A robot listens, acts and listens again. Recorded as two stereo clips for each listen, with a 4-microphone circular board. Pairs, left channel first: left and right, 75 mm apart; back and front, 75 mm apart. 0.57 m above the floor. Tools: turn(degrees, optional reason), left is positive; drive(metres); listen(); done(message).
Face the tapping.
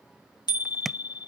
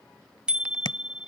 turn(degrees=180, reason="The tapping: straight behind.")
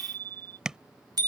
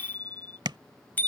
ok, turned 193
turn(degrees=-10, reason="The tapping is now 10° right.")
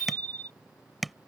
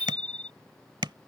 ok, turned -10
done("Facing the tapping.")